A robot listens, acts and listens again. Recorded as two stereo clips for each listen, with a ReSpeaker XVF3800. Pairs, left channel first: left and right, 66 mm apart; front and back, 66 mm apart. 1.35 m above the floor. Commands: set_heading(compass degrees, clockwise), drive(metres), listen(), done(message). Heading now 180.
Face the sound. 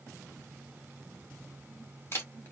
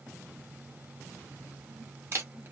set_heading(45)
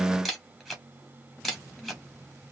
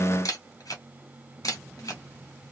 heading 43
done("Found it: a camera shutter, straight ahead, 1 to 2 m away.")